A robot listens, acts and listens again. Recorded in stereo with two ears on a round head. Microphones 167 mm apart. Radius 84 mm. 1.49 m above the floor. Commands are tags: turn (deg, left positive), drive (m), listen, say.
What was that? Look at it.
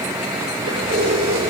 <turn deg="-70"/>
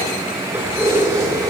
<turn deg="-20"/>
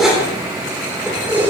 <turn deg="-10"/>
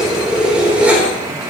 <turn deg="-10"/>
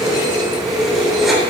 <say>Facing the keys jangling.</say>